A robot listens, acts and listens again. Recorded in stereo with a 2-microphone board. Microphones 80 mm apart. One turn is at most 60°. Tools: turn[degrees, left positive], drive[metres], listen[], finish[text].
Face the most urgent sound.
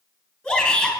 Thought: The shout: about 20° left or 160° left.
Action: turn[20]
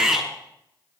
Action: finish[Found it: a shout, straight ahead.]